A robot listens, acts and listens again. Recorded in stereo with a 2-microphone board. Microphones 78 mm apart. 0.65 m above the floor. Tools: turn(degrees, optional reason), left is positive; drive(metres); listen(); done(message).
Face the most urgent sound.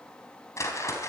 listen()
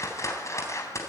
listen()
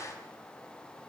done("I can't make out anything urgent, only a whoosh.")